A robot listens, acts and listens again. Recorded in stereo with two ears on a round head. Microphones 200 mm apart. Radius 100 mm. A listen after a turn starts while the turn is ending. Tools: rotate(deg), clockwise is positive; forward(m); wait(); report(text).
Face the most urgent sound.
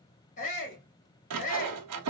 rotate(-35)
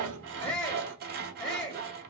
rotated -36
report("Found it: a shout, straight ahead.")